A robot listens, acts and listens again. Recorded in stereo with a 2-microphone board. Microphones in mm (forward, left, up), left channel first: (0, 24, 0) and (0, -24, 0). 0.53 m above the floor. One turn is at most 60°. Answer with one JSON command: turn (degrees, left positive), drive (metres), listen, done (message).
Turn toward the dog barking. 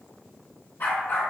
{"turn": 45}
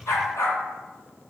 {"turn": 60}
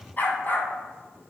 {"turn": 45}
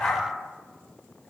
{"turn": 25}
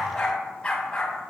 {"turn": 25}
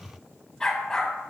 {"turn": 10}
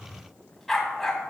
{"done": "Found it: a dog barking, straight ahead, 1 to 2 m away."}